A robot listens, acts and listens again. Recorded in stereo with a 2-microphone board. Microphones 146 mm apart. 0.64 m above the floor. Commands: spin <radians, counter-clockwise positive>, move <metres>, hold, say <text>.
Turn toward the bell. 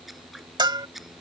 spin -0.52
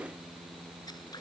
hold
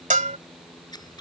spin -2.09
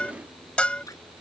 spin 0.17
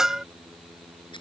say Found it: a bell, straight ahead.